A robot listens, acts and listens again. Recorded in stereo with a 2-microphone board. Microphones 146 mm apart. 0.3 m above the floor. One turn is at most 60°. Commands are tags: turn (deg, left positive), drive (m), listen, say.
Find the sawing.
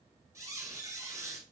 <listen/>
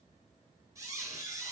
<listen/>
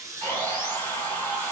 <turn deg="15"/>
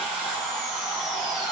<say>Found it: sawing, straight ahead.</say>